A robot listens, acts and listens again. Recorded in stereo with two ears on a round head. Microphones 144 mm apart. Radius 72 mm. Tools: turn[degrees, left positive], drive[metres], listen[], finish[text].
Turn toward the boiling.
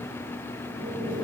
Thought: The boiling: about 65° right or 115° right.
Action: turn[-65]
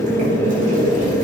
Thought: So it is at 50° right.
Action: turn[-50]
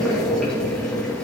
Action: finish[Facing the boiling, over 4 m away.]